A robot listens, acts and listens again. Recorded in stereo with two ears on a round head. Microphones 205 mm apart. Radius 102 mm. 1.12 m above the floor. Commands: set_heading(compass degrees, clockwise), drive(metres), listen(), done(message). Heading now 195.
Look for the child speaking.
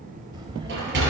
set_heading(220)
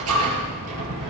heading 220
listen()
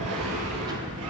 set_heading(245)
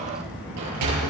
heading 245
done("Facing the child speaking.")